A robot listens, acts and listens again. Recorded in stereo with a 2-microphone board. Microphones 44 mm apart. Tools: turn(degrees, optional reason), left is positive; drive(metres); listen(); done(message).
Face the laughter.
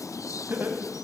turn(degrees=-60, reason="The laughter: about 60° right or 120° right.")
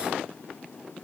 listen()
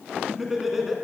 turn(degrees=-10, reason="So it is at 10° right.")
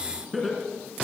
done("Found it: laughter, straight ahead.")